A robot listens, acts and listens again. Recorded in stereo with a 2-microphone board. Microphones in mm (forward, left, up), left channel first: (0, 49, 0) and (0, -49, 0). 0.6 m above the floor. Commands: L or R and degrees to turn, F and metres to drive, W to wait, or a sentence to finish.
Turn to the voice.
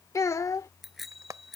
L35
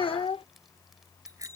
L110
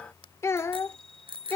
L25
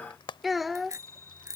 Facing the child speaking.